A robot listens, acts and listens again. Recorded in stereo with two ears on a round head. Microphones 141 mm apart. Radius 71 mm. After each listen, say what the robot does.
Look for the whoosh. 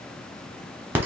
Keep listening.
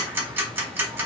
Keep listening.
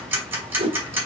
Turn 40° right.
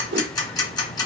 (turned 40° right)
Turn 100° right.
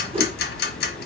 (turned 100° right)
Turn 35° right.
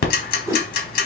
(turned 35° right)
Turn 15° right.
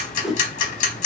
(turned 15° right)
Facing the whoosh, under 1 m away.